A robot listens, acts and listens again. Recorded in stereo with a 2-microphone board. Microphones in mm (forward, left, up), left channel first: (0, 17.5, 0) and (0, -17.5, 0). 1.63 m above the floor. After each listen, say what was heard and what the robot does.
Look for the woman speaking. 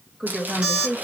The woman speaking: about 15° right or 165° right. Turn 15° right.
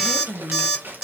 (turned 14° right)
The woman speaking: about 40° right or 140° right. Turn 40° right.
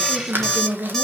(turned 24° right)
So it is at 100° right. Turn 100° right.
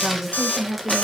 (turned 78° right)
Facing the woman speaking.